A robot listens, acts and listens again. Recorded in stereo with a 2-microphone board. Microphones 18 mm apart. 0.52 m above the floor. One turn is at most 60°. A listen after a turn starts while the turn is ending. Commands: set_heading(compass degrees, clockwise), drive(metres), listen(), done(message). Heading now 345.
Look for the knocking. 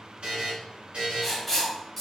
listen()
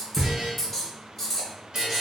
set_heading(25)
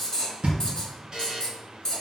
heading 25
set_heading(85)
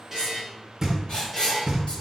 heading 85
set_heading(120)
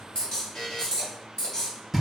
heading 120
done("Facing the knocking.")